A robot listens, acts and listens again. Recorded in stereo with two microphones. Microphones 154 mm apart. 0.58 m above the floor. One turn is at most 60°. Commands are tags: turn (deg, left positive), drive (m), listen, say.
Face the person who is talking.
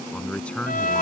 <turn deg="30"/>
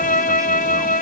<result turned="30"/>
<listen/>
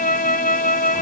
<listen/>
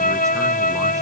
<say>I heard a man speaking, but can't make it out now. It was about 20° right or 140° left.</say>